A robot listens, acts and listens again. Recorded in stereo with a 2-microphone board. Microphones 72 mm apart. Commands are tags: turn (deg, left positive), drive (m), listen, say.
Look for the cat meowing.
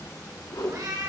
<turn deg="-55"/>
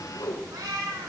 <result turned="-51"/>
<turn deg="-55"/>
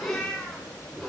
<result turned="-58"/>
<turn deg="15"/>
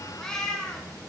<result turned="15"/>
<turn deg="15"/>
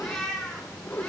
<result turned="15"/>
<turn deg="10"/>
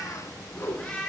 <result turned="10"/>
<turn deg="10"/>
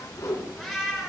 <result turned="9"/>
<say>Facing the cat meowing, 2 to 4 m away.</say>